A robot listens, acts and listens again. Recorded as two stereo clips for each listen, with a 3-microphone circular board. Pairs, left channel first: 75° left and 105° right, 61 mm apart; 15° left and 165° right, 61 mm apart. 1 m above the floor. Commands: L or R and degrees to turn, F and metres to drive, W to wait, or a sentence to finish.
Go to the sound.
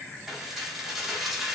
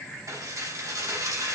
L170
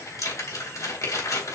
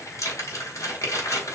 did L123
L50
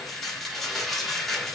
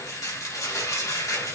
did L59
R10
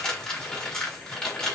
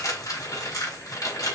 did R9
F1.0
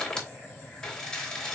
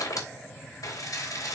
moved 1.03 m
F1.0
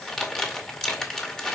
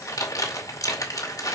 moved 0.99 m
F1.0
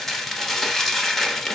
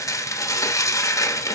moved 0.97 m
R10
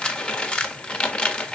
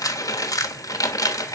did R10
F1.0
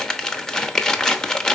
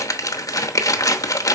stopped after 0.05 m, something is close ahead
I am next to the dishes clattering.